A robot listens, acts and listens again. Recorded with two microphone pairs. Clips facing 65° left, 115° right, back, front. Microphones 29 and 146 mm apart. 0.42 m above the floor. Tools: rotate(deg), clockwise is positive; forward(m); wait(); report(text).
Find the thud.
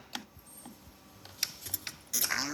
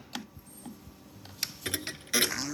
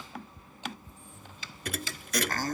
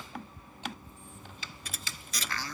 rotate(150)
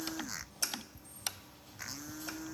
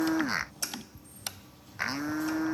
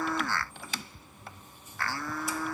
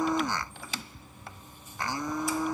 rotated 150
report("Facing where the thud came from. I can't hear it now.")